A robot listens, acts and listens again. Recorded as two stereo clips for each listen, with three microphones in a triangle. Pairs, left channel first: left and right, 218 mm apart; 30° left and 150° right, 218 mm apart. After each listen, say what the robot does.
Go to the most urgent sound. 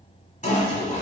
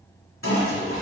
Keep listening.
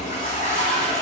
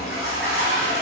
Keep listening.
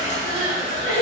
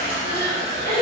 Turn 105° left.
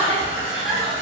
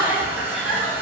Drive 1.0 m forward.
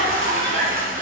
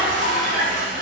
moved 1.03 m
Keep listening.
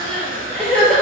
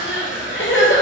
Drive 1.0 m forward.
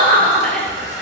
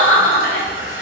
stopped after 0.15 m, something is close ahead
I am next to the crying.